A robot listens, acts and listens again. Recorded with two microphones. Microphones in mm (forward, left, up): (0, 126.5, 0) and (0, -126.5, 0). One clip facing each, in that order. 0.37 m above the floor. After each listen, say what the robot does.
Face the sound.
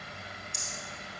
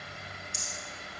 Turn 30° right.
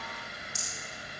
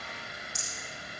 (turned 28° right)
Turn 20° left.
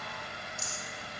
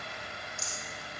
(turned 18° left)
Facing the rattle, over 4 m away.